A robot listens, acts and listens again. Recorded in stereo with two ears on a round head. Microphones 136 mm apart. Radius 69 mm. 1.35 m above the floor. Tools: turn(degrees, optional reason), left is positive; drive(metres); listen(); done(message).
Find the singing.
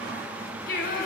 turn(degrees=65, reason="The singing: about 65° left or 115° left.")
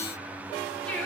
turn(degrees=10, reason="So it is at 10° left.")
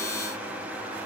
listen()
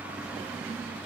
listen()
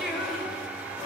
done("Facing the singing.")